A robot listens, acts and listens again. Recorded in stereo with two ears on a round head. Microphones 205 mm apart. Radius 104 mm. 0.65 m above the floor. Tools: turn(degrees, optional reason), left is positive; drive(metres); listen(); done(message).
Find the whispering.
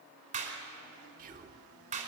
turn(degrees=-35, reason="The whispering: about 35° right or 145° right.")
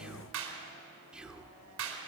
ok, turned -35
done("Facing the whispering.")